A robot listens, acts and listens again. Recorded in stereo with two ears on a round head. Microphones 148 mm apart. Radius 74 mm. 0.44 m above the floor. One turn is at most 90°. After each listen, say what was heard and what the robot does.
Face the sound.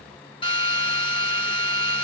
The drill: about 30° left or 150° left. Turn 30° left.
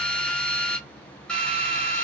Found it: a drill, straight ahead, 1 to 2 m away.